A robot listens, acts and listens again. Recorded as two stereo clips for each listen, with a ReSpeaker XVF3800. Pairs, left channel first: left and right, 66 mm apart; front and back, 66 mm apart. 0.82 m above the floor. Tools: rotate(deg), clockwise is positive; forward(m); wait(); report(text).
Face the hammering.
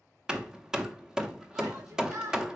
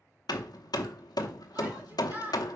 rotate(10)
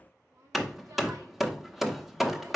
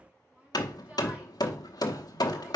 report("Found it: hammering, straight ahead, under 1 m away.")